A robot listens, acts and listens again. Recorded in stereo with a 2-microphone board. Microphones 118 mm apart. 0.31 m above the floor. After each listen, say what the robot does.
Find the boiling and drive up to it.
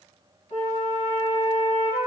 Keep listening.
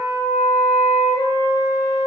Keep listening.
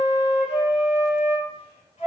I can't make out boiling to turn to.